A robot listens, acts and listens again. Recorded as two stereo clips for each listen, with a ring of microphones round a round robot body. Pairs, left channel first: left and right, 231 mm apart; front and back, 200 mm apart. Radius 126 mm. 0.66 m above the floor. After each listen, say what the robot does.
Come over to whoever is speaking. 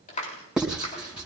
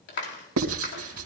Keep listening.
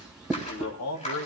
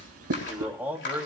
Turn 100° left.
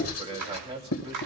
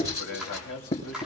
Turn 25° right.
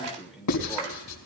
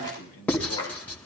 Drive 1.0 m forward.
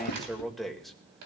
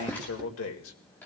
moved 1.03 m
Drive 1.0 m forward.
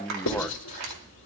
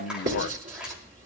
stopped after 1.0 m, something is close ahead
I am next to the man speaking.